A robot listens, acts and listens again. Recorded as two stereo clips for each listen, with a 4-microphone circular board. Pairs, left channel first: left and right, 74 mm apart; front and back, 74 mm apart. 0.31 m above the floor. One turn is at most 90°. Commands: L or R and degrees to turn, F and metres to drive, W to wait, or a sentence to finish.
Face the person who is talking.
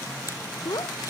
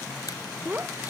L90
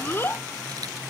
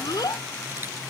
L30
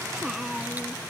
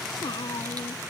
Found it: a child speaking, straight ahead.